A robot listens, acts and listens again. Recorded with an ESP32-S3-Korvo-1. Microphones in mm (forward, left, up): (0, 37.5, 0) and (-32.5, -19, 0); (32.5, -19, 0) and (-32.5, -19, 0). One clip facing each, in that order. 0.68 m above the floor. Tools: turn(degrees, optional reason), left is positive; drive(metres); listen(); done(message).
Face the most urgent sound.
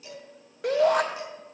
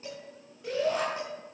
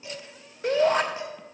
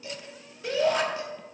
turn(degrees=45, reason="The shout: 45° left.")
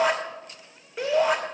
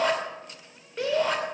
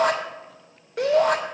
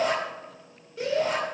turn(degrees=-20, reason="The shout is now 20° right.")
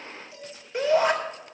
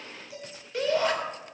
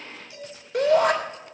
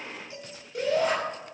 turn(degrees=-10, reason="The shout is now 10° right.")
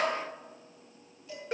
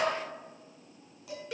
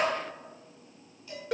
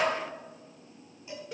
done("Facing the shout, 2 to 4 m away.")